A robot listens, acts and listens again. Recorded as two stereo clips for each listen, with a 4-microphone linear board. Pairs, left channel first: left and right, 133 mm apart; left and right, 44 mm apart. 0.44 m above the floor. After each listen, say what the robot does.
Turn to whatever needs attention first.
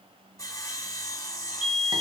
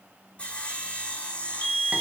Turn 50° left.
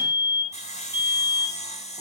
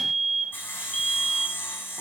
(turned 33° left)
Turn 30° left.
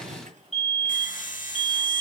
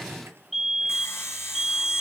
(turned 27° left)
Found it: a fire alarm, straight ahead.